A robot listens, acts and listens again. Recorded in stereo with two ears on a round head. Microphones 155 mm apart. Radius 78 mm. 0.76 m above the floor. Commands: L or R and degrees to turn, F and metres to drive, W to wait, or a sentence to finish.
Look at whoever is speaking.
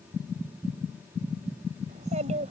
R45
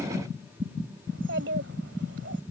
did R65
R70
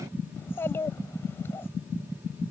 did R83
L15
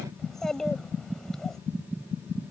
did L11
Facing the child speaking.